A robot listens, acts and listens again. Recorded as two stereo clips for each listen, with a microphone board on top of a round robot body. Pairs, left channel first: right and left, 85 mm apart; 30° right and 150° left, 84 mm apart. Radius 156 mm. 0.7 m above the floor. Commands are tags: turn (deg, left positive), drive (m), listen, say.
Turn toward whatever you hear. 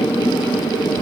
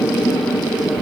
<listen/>
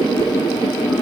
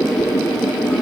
<listen/>
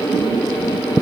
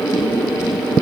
<say>I can't make out anything.</say>